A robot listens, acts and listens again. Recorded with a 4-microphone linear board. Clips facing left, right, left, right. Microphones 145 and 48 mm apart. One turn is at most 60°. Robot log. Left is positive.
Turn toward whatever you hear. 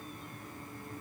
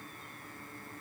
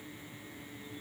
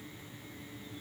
cmd idle
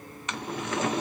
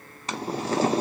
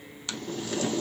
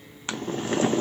note: The boiling: about 35° right or 145° right.
cmd yaw -35
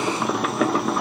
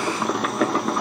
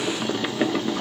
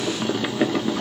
end: Found it: boiling, straight ahead.